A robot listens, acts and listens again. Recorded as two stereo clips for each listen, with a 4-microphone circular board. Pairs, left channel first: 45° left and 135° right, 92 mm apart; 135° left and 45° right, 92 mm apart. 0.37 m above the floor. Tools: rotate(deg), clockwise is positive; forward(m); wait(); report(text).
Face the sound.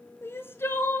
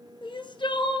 rotate(-110)
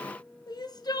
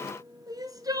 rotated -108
report("Facing the crying, 1 to 2 m away.")